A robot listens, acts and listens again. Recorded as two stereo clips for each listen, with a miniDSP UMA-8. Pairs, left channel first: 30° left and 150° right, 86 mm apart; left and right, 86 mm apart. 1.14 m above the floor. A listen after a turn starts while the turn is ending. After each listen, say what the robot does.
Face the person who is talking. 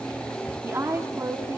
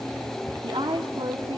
Turn 95° right.
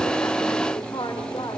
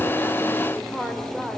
Found it: a woman speaking, straight ahead, 2 to 4 m away.